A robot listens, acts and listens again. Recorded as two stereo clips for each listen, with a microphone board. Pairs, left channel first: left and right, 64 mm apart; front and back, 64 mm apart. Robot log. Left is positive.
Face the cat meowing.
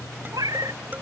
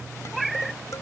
note: The cat meowing: 90° right.
cmd yaw -90
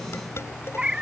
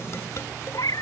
note: The cat meowing is now 15° right.
cmd yaw -15
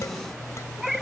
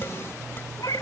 end: Found it: a cat meowing, straight ahead.